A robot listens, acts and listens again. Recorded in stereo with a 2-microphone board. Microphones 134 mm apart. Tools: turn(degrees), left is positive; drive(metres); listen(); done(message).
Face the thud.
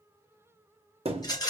turn(degrees=-45)
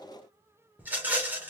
listen()
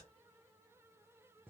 done("I heard a thud, but can't make it out now. It was about straight ahead or 90° right.")